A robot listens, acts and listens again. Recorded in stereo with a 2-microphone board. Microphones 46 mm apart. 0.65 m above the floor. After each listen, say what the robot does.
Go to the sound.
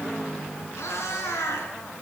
Turn 90° left.
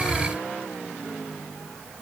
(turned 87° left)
Keep listening.
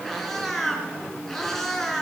Drive 1.0 m forward.
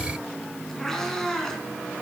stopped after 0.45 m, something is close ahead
Turn 10° left.
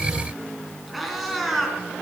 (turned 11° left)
Blocked. The cat meowing is further on, straight ahead.